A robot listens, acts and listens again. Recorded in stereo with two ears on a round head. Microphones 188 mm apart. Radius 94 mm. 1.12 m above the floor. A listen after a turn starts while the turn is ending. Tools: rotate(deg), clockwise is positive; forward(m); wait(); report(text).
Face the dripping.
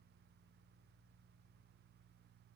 wait()
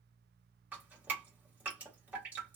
rotate(30)
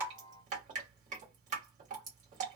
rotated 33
rotate(140)
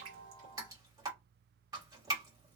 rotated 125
rotate(20)
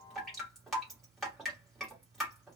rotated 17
report("Facing the dripping.")